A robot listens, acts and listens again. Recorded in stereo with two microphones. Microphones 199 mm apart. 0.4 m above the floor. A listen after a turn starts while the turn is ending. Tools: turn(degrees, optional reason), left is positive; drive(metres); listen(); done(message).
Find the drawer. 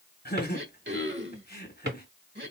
turn(degrees=-60, reason="The drawer: about 60° right or 120° right.")
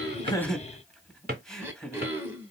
turn(degrees=-55, reason="So it is at 55° right.")
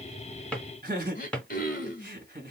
done("Facing the drawer.")